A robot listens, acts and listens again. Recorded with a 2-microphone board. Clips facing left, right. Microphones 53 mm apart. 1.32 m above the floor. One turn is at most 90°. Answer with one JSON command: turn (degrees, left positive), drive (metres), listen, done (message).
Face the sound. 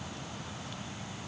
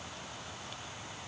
{"listen": true}
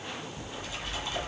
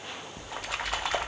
{"turn": -90}
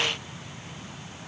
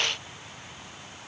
{"done": "I heard a splash from this way, but can't make it out now."}